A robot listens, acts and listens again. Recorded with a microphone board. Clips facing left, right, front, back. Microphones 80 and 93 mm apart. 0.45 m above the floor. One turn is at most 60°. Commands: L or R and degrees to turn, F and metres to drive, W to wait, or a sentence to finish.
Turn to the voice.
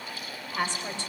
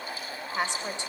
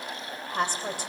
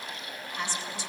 R20
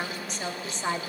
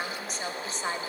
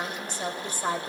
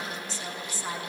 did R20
Facing the woman speaking, 2 to 4 m away.